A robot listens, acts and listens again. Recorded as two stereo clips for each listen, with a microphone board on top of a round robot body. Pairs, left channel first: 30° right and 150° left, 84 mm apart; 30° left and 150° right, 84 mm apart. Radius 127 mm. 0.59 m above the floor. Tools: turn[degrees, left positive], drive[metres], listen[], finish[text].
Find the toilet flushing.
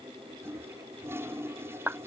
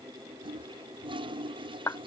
Thought: The toilet flushing: 150° right.
Action: turn[-150]
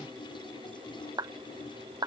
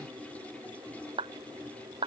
Thought: The toilet flushing is now 45° right.
Action: turn[-45]
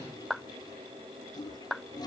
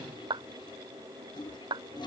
Action: finish[Found it: a toilet flushing, straight ahead.]